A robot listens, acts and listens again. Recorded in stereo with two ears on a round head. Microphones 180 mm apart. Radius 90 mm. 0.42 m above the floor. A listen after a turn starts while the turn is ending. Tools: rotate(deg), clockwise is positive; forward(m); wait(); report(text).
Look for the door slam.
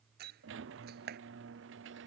rotate(50)
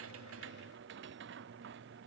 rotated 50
wait()
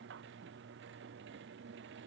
report("I heard a door slam, but can't make it out now. It was about straight ahead or 80° right.")